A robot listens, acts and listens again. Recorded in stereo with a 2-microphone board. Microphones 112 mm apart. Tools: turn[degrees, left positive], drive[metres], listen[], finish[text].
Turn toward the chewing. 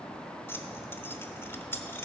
Action: listen[]
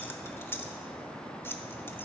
Action: listen[]
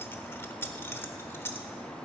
Action: finish[I can't make out chewing to turn to.]